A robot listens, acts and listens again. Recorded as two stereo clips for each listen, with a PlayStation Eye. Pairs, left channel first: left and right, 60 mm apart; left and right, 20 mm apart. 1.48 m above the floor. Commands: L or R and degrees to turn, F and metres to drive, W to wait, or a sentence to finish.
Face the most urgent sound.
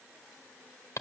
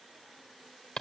W
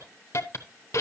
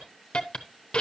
W
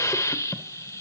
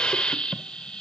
I can't make out anything urgent to turn to.